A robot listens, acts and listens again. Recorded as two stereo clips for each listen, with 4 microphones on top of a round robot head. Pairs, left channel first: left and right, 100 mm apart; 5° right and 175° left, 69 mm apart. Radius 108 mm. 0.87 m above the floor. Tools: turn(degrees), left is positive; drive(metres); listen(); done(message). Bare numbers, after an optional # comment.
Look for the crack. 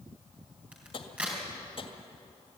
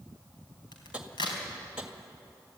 # The crack: 10° right.
turn(-10)
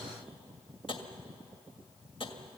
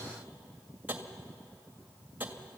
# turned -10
done("Facing where the crack came from. I can't hear it now.")